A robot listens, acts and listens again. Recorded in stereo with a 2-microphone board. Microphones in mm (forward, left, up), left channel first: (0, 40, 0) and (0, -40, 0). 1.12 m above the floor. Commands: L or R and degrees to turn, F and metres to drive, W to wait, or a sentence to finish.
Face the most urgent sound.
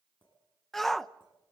L30
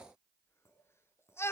L145
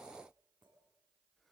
W
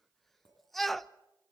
Facing the shout, under 1 m away.